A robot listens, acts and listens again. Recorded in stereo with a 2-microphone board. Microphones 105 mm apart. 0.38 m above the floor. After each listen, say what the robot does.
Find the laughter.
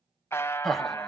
Turn 30° left.
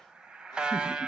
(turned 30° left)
Keep listening.
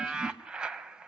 Keep listening.
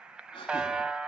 Turn 130° left.
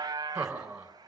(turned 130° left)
Turn 10° right.
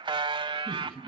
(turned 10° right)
Found it: laughter, straight ahead.